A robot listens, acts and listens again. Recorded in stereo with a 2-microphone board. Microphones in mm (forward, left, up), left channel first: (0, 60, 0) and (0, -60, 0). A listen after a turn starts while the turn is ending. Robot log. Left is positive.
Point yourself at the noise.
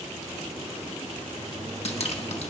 note: The dripping: about 55° left or 125° left.
cmd yaw +55
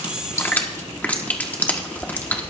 note: So it is at 15° left.
cmd yaw +15
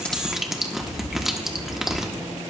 end: Facing the dripping, 1 to 2 m away.